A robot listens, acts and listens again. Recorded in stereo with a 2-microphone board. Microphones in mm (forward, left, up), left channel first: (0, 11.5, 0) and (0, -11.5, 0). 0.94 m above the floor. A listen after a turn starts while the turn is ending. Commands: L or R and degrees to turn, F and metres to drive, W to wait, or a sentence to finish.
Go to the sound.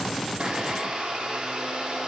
R55
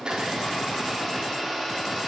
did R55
F1.0
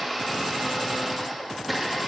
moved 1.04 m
F1.0
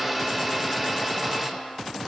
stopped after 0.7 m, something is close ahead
R10
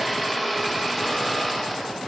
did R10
I am next to the blender.